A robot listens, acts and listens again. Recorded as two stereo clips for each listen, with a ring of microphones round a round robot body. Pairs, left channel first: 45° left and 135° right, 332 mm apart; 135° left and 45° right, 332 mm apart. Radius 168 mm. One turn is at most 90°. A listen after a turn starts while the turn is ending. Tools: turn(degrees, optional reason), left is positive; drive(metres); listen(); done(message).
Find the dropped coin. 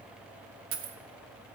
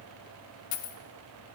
turn(degrees=90, reason="The dropped coin: 165° left.")
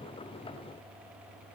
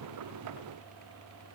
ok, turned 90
turn(degrees=75, reason="Nothing new. It was at 75° left.")
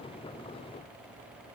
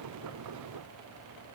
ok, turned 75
done("I heard a dropped coin from this way, but can't make it out now.")